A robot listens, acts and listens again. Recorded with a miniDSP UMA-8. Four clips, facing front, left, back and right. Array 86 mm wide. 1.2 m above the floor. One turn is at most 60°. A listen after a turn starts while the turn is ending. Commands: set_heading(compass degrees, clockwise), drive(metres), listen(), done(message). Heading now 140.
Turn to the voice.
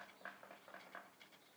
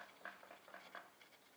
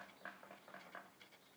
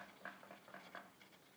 listen()
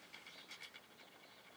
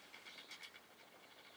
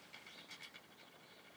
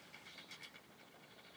listen()
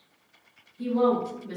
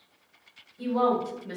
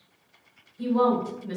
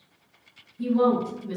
set_heading(80)
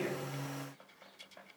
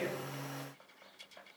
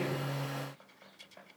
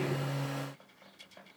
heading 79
set_heading(34)
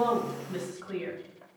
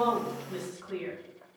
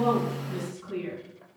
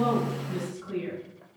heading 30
done("Facing the woman speaking, 1 to 2 m away.")